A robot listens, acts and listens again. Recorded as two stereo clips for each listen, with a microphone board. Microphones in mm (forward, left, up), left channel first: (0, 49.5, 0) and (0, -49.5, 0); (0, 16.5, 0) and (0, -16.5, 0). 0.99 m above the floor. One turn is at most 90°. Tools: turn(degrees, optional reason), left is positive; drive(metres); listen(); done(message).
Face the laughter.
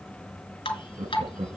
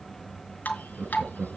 turn(degrees=-70, reason="The laughter: about 70° right or 110° right.")
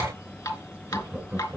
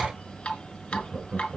done("Found it: laughter, straight ahead.")